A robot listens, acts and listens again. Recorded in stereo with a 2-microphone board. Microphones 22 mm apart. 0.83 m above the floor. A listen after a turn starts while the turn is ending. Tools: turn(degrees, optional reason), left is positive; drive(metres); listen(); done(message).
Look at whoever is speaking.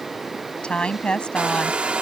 turn(degrees=50, reason="The woman speaking: about 50° left or 130° left.")
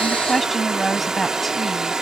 done("Facing the woman speaking.")